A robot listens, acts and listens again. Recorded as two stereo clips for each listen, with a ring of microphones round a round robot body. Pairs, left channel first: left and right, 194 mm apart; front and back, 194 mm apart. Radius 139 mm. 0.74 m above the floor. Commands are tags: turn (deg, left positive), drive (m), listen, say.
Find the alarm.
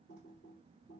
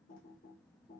<listen/>
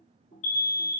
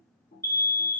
<turn deg="70"/>
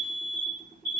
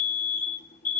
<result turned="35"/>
<turn deg="35"/>
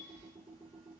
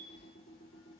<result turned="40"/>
<listen/>
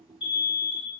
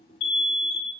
<say>Found it: an alarm, straight ahead.</say>